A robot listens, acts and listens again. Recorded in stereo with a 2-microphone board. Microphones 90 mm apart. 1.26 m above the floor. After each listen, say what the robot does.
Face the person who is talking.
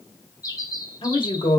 Turn 90° left.
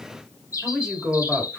Turn 10° right.
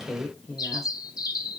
Facing the woman speaking.